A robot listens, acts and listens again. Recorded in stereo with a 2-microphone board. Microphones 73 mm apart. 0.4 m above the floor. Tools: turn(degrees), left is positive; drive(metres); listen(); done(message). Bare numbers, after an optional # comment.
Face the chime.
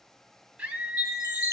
# The chime: about 55° left or 125° left.
turn(55)
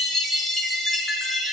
done("Found it: a chime, straight ahead, 1 to 2 m away.")